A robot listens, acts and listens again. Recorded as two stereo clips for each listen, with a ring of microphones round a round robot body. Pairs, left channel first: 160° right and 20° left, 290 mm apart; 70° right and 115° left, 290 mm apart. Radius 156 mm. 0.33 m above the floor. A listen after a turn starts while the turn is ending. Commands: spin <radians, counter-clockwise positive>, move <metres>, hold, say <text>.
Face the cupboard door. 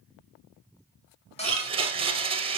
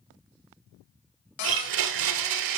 spin -1.57
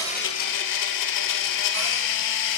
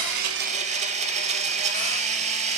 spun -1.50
hold
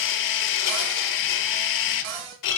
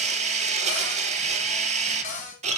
say Found it: a cupboard door, straight ahead.